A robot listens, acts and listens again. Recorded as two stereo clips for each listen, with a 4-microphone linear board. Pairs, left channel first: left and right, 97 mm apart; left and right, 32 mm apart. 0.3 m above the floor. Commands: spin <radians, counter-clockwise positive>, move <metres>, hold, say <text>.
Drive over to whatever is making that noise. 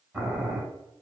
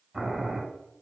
spin -0.26
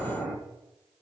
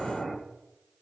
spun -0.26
move 1.0
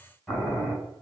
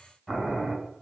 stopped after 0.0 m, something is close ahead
say Blocked. The boiling is further on, straight ahead.